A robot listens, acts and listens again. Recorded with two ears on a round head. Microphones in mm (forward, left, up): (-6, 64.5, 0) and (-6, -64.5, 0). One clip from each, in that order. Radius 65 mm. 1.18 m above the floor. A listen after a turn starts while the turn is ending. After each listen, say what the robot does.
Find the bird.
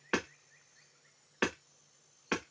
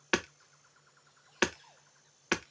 Keep listening.
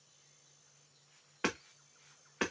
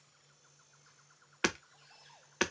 Keep listening.
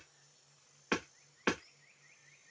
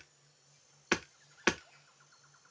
I can't make out a bird, only hammering.